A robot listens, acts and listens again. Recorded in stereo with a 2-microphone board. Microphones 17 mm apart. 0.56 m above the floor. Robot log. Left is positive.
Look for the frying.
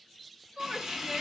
note: The frying: about 30° right or 150° right.
cmd yaw -30
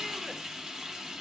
note: So it is at 115° right.
cmd yaw -115
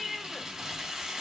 note: The frying is now 40° right.
cmd yaw -40
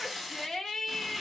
end: Facing the frying.